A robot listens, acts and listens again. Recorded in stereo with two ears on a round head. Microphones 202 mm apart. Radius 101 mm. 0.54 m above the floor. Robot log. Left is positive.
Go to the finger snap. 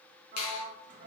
note: The finger snap: about 75° left or 105° left.
cmd yaw +75
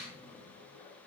cmd fwd 1.0
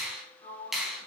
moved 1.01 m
cmd fwd 1.0
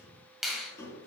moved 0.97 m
cmd fwd 1.0
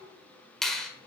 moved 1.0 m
cmd fwd 1.0
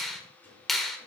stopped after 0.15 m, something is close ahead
end: I am next to the finger snap.